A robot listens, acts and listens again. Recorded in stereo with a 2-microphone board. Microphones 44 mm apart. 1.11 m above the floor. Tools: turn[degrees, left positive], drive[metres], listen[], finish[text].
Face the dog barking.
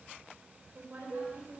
Action: listen[]
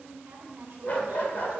Thought: The dog barking: about 45° left or 135° left.
Action: turn[45]
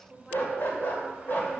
Thought: The dog barking: about 45° left or 135° left.
Action: turn[45]
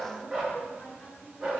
Thought: So it is at 10° right.
Action: turn[-10]
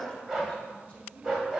Action: finish[Facing the dog barking, 2 to 4 m away.]